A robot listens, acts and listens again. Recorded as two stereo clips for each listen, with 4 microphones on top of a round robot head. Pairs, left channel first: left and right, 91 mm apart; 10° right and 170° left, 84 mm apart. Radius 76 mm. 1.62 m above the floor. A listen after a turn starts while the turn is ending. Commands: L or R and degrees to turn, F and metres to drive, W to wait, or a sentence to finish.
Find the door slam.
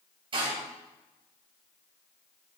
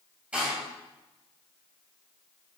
R110
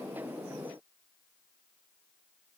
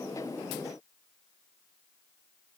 Facing where the door slam came from. I can't hear it now.